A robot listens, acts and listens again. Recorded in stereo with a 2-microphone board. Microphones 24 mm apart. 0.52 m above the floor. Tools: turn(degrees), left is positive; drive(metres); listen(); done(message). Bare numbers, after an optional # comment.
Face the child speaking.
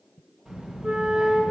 # The child speaking: about 20° right or 160° right.
turn(-20)
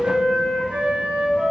listen()
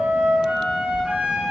# So it is at 135° right.
turn(-135)
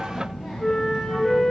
# The child speaking is now 35° right.
turn(-35)
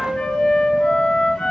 done("Found it: a child speaking, straight ahead.")